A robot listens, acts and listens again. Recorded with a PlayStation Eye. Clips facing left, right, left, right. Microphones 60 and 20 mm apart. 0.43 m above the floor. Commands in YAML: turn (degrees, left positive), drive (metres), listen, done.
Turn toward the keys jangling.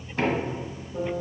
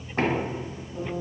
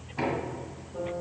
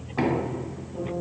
listen: true
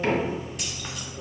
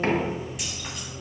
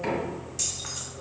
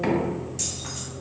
turn: 30
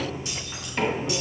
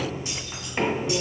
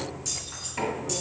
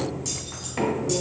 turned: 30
turn: -30
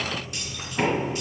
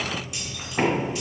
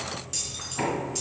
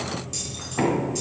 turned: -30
done: "Facing the keys jangling."